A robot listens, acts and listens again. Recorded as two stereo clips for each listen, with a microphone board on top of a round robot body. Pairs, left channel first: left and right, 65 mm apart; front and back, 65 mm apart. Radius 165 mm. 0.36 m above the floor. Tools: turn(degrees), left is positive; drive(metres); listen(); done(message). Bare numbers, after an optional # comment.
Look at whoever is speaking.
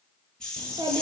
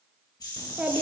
# The child speaking: 105° right.
turn(-105)
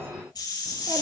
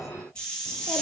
listen()
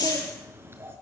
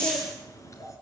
# The child speaking is now 40° right.
turn(-40)
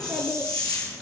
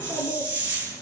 listen()
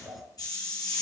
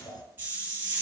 done("Found it: a child speaking, straight ahead, 2 to 4 m away.")